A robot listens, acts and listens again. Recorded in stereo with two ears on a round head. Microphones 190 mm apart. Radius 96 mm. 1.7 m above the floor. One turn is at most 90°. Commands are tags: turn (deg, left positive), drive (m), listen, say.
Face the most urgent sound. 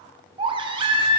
<turn deg="-25"/>
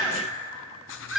<say>Facing the baby crying.</say>